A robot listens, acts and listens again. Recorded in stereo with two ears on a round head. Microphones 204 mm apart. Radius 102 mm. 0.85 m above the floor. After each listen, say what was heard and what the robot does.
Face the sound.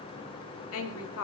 The woman speaking: about 70° left or 110° left. Turn 70° left.
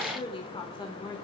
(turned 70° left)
So it is at 20° left. Turn 20° left.
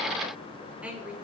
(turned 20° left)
Found it: a woman speaking, straight ahead.